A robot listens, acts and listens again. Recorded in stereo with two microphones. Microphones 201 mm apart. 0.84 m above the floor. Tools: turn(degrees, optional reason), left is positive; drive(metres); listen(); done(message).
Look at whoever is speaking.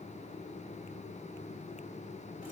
listen()
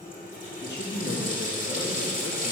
turn(degrees=60, reason="The man speaking: about 60° left or 120° left.")
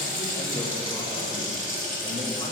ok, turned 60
listen()
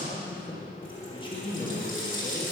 turn(degrees=30, reason="So it is at 30° left.")
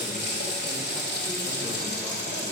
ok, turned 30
listen()
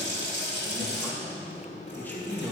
turn(degrees=10, reason="The man speaking is now 10° left.")
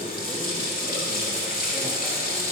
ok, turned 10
listen()
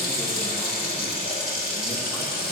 listen()
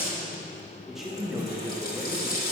done("Facing the man speaking.")